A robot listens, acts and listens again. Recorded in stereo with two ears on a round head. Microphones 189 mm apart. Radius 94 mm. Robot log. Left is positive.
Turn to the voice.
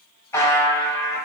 cmd idle
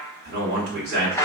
note: The man speaking: about 55° right or 125° right.
cmd yaw -55
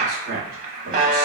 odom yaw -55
note: So it is at 60° right.
cmd yaw -60
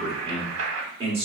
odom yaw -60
note: The man speaking is now 30° right.
cmd yaw -30
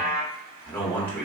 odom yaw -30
note: The man speaking is now 10° left.
cmd yaw +10
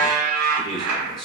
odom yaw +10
end: Found it: a man speaking, straight ahead.